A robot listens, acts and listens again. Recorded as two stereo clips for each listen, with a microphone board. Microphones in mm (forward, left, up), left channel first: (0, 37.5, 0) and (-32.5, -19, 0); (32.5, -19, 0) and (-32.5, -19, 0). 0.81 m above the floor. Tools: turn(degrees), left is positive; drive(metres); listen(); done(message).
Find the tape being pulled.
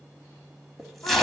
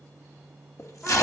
turn(degrees=-30)
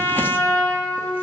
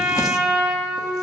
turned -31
listen()
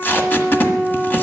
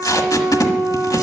done("Found it: tape being pulled, straight ahead.")